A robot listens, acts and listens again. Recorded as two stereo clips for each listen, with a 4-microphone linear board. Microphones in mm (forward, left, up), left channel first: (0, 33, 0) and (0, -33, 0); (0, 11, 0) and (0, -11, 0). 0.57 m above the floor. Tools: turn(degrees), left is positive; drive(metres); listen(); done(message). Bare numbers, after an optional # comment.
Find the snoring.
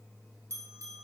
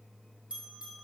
listen()
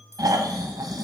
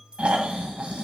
turn(-90)
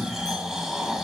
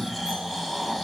# So it is at 10° right.
turn(-10)
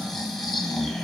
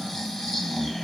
done("Found it: snoring, straight ahead, 1 to 2 m away.")